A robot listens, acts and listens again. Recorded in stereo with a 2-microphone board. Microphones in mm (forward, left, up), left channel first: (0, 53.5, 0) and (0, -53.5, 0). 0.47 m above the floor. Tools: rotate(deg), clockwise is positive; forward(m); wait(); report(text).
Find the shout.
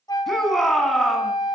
rotate(-30)
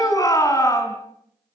rotate(-145)
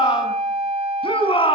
rotate(-55)
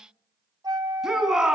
report("Found it: a shout, straight ahead, over 4 m away.")